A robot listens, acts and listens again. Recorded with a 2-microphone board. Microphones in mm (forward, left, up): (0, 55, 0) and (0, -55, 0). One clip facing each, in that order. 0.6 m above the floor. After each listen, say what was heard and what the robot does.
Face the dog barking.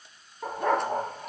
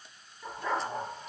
The dog barking: about 60° left or 120° left. Turn 60° left.
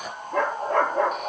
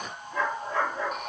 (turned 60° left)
So it is at 60° left. Turn 60° left.
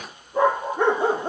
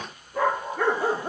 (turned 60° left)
The dog barking is now 25° left. Turn 25° left.
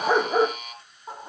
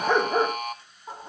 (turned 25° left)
The dog barking is now 10° left. Turn 10° left.
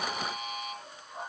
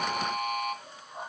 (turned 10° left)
Keep listening.
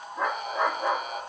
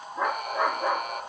Facing the dog barking.